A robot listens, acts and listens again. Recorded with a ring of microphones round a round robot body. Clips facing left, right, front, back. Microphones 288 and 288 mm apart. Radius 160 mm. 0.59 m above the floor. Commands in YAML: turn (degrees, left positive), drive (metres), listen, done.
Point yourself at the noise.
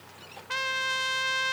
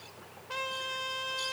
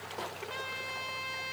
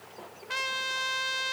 turn: 145
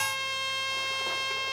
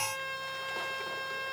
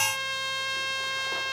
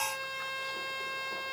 turn: 45
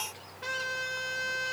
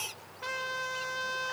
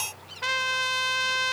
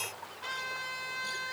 done: "Facing the trumpet."